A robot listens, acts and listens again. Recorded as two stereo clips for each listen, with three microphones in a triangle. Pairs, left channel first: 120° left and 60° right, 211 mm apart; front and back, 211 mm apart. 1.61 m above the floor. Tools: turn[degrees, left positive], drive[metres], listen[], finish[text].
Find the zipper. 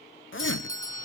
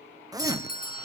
Thought: The zipper: 105° left.
Action: turn[105]
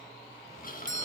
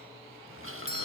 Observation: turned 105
Action: listen[]
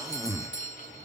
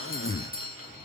Thought: The zipper is now 15° left.
Action: turn[15]
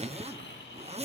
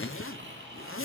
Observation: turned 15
Action: finish[Facing the zipper.]